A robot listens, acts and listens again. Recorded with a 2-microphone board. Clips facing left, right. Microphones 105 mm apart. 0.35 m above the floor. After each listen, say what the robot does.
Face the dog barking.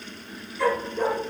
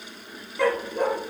Turn 55° right.
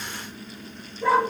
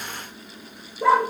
Turn 80° right.
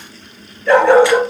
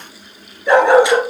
Turn 20° right.
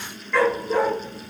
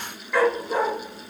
Turn 15° right.
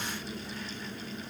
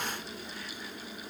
Keep listening.
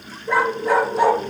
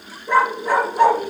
Facing the dog barking, 2 to 4 m away.